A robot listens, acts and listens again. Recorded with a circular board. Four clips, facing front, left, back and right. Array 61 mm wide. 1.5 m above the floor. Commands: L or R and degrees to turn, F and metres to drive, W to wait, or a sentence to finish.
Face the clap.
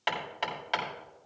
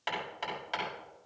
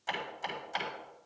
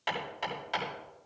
W
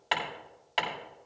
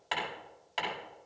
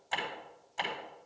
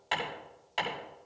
W
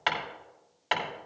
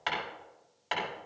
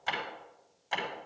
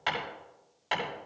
I can't make out a clap, only hammering.